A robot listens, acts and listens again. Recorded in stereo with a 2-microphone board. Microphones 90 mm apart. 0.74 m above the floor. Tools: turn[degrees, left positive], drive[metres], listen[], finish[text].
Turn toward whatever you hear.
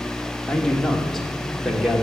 Action: turn[-30]
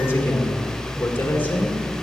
Thought: So it is at 20° left.
Action: turn[20]
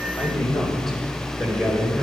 Action: finish[Found it: a man speaking, straight ahead.]